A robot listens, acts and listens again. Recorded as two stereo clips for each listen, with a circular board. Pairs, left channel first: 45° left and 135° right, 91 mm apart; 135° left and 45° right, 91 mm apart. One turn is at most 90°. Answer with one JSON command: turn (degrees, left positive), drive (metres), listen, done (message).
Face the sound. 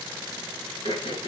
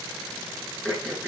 {"turn": 55}
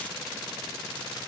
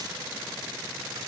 {"listen": true}
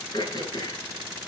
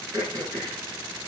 {"done": "Found it: throat clearing, straight ahead, over 4 m away."}